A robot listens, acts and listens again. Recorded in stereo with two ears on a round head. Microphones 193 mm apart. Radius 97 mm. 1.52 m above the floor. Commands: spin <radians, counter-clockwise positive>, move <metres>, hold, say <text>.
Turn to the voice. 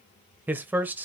spin -0.52
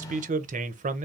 spin -2.44
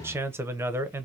spin -0.17
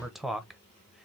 say Found it: a man speaking, straight ahead, under 1 m away.